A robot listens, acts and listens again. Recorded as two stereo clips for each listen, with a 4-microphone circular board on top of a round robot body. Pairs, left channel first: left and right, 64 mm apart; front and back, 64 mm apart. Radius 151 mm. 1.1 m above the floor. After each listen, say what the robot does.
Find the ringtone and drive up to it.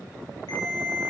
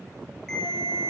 Turn 80° left.
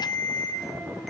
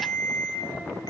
Drive 1.0 m forward.
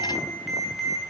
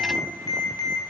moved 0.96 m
Drive 1.0 m forward.
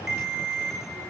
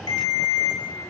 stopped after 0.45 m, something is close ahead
I am next to the ringtone.